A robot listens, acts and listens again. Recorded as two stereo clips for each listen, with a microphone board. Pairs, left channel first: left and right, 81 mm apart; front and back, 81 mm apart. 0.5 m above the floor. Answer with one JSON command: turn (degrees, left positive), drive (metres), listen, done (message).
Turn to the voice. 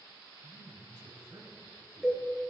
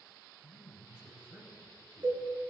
{"turn": -105}
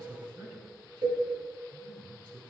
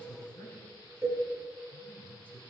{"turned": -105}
{"turn": -65}
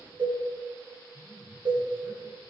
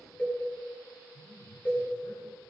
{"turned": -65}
{"turn": -20}
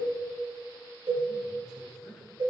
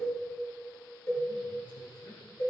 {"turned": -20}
{"done": "Found it: a man speaking, straight ahead, over 4 m away."}